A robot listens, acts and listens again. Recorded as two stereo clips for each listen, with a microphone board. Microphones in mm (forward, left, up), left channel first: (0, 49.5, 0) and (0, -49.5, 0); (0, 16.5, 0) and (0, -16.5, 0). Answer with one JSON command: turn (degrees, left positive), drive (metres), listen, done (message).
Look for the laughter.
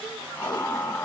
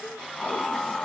{"turn": 25}
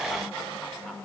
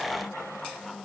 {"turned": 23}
{"listen": true}
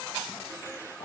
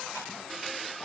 {"listen": true}
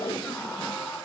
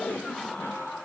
{"turn": 30}
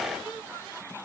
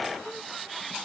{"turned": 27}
{"listen": true}
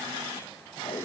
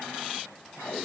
{"listen": true}
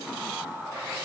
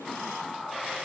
{"turn": -10}
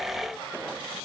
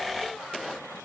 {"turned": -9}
{"listen": true}
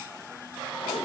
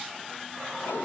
{"listen": true}
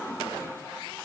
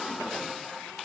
{"done": "Facing where the laughter came from. I can't hear it now."}